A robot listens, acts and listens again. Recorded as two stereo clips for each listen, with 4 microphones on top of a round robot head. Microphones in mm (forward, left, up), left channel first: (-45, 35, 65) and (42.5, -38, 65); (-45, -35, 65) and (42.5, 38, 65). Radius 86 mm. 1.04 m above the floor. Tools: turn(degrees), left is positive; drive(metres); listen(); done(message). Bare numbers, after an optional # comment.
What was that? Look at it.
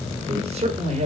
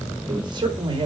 # The man speaking: 10° right.
turn(-10)
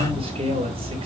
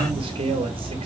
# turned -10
done("Found it: a man speaking, straight ahead, 2 to 4 m away.")